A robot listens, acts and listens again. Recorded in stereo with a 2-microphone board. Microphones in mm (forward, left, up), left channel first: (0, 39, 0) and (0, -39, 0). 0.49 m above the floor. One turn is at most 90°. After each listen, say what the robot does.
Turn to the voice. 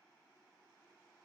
Keep listening.
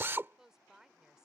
Turn 30° right.
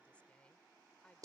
Turn 20° left.
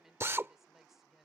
Facing the woman speaking.